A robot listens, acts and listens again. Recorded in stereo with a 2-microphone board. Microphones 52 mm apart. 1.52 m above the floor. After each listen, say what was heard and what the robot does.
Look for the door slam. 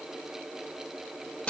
Keep listening.
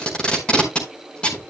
Keep listening.
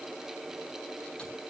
I can't make out a door slam, only tape being pulled.